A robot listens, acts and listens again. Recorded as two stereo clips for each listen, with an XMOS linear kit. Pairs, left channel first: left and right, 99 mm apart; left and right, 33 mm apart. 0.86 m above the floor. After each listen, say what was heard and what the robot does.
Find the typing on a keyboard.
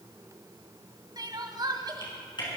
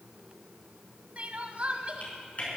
The typing on a keyboard: about 50° left or 130° left. Turn 50° left.
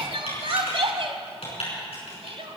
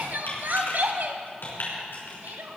So it is at 80° left. Turn 80° left.
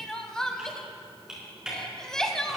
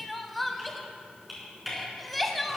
Facing the typing on a keyboard, over 4 m away.